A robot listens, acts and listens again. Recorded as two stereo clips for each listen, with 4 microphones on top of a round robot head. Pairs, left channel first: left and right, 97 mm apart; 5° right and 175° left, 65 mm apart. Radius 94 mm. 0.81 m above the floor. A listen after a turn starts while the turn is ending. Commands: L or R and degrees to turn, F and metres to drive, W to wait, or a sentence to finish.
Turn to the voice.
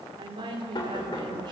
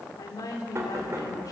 R45
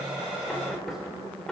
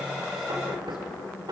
W
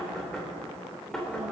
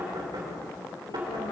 W
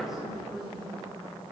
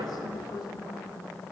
Facing the woman speaking.